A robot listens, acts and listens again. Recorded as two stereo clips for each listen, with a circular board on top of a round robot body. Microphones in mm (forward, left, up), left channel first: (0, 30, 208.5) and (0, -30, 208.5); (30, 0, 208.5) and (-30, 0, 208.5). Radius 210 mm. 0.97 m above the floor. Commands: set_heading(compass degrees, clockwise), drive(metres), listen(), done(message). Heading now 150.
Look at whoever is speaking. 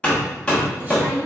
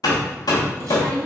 set_heading(305)
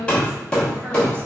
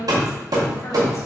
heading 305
set_heading(325)
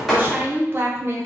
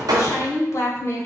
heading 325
set_heading(10)
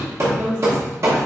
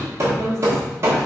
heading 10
set_heading(25)
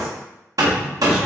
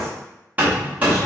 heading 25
listen()
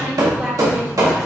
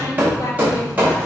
done("Found it: a woman speaking, straight ahead.")